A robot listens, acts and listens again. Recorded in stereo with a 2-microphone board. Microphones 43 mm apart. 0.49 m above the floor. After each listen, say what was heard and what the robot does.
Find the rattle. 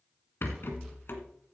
The rattle: about 50° left or 130° left. Turn 50° left.
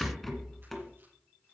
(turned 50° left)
Found it: a rattle, straight ahead, 1 to 2 m away.